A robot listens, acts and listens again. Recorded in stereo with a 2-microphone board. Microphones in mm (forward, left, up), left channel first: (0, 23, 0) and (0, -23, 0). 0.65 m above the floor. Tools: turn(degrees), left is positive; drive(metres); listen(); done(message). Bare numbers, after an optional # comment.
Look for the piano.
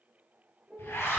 # The piano: about 25° right or 155° right.
turn(-25)
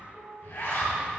done("Facing the piano, 1 to 2 m away.")